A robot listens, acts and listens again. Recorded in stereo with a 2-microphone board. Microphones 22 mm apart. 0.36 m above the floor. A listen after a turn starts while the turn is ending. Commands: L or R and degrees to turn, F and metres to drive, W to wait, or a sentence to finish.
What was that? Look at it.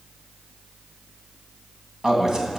R30
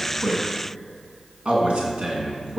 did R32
R120
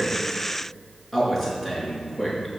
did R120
Found it: a man speaking, straight ahead, over 4 m away.